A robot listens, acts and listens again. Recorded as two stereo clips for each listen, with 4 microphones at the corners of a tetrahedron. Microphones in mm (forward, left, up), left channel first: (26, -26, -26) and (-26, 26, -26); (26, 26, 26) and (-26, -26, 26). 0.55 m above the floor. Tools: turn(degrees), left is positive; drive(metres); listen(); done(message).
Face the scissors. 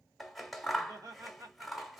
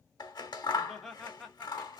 turn(degrees=45)
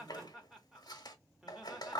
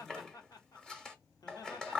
turn(degrees=-35)
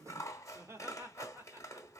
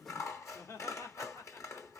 done("Found it: scissors, straight ahead.")